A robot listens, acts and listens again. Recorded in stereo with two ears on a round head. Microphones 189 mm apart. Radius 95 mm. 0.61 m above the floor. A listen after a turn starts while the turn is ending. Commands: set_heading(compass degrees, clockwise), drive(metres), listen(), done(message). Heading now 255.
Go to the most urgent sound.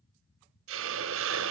listen()
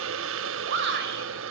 set_heading(310)
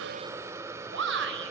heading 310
set_heading(15)
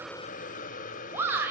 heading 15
set_heading(25)
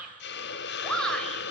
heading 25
drive(1.0)
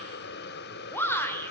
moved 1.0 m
set_heading(15)
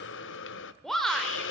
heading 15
drive(1.0)
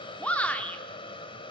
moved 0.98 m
set_heading(5)
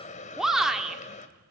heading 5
drive(1.0)
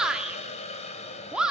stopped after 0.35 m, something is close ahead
done("I am next to the shout.")